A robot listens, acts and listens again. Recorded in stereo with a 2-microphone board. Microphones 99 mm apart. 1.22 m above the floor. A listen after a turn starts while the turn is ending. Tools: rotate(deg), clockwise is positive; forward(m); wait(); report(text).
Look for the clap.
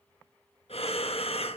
wait()
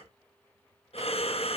wait()
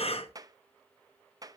rotate(35)
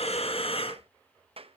rotate(105)
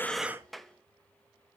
report("Facing the clap, under 1 m away.")